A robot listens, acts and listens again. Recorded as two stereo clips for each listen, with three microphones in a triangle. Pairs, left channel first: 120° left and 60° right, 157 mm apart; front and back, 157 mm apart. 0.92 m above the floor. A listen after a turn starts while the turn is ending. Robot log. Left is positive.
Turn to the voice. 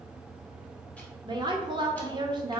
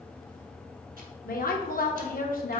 end: Found it: a woman speaking, straight ahead.